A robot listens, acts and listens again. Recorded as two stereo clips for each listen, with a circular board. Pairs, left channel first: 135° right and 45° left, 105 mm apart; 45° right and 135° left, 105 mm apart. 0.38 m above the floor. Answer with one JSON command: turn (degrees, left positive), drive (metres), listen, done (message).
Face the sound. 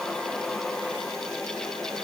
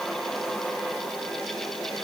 {"listen": true}
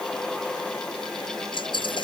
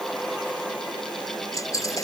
{"turn": -100}
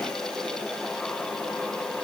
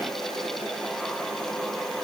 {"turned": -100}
{"done": "Facing where the dropped coin came from. I can't hear it now."}